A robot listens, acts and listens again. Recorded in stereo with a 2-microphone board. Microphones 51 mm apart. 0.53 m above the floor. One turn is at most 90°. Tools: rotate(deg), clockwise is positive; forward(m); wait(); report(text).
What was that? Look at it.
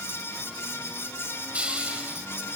rotate(20)
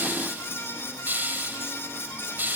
rotate(90)
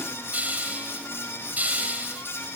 rotate(35)
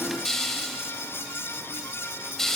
report("Found it: a hiss, straight ahead.")